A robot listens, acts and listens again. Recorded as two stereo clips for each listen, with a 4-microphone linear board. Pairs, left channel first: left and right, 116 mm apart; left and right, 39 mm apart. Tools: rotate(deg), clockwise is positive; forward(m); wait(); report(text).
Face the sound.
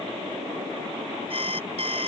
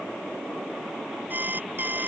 rotate(55)
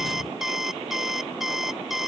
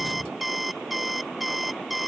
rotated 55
report("Found it: an alarm clock, straight ahead.")